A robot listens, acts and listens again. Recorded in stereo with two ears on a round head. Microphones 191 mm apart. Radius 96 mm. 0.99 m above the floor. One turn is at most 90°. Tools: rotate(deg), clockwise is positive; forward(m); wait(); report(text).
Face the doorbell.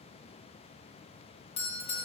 rotate(-25)
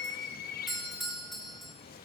report("Facing the doorbell, 1 to 2 m away.")